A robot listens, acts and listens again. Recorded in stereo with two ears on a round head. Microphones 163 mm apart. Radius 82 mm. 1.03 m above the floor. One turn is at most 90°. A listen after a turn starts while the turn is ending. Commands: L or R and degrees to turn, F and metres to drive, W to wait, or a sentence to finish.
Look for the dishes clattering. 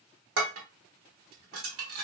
R90
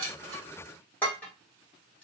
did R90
L10
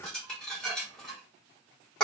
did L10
Facing the dishes clattering.